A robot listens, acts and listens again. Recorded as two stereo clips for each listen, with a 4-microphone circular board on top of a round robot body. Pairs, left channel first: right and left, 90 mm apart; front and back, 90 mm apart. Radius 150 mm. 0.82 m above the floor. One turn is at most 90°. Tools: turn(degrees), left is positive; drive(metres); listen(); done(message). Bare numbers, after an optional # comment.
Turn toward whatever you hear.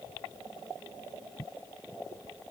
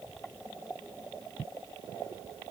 listen()
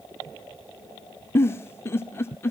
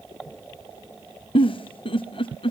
# The giggle: 25° right.
turn(-25)
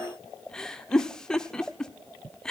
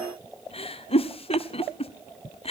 # The giggle is now 10° right.
turn(-10)
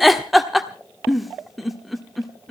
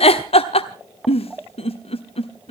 done("Found it: a giggle, straight ahead, 1 to 2 m away.")